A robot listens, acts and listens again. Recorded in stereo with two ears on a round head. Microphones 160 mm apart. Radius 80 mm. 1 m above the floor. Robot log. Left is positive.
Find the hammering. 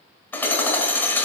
cmd yaw +30
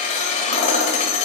note: So it is at 135° left.
cmd yaw +135
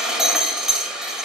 end: Found it: hammering, straight ahead, 1 to 2 m away.